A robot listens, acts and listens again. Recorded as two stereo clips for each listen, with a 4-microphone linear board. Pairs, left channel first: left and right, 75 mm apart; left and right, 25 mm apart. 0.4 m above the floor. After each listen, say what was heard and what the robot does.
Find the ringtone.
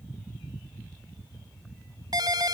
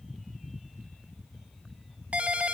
The ringtone: about 60° right or 120° right. Turn 60° right.
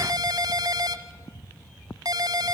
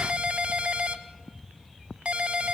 So it is at 60° right. Turn 60° right.
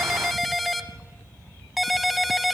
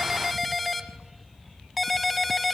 Facing the ringtone, 1 to 2 m away.